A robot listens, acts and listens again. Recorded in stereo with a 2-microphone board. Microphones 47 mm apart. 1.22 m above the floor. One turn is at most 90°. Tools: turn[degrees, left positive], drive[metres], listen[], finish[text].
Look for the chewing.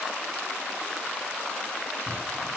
Action: listen[]
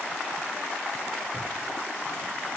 Action: listen[]
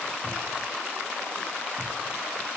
Action: finish[I can't make out chewing, only a cupboard door.]